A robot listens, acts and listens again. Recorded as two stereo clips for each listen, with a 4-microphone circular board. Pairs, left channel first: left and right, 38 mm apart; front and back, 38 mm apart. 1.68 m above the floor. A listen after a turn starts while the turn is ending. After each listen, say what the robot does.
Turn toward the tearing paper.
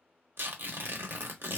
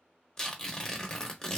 Turn 70° right.
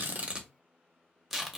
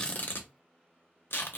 Found it: tearing paper, straight ahead, under 1 m away.